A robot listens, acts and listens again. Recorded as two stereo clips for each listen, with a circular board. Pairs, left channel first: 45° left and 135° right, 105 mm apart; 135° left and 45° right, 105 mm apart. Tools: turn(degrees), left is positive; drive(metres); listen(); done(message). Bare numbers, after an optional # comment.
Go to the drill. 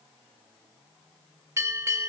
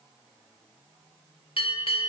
listen()
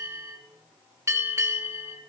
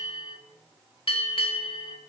listen()
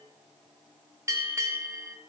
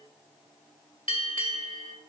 done("I can't make out a drill, only a bell.")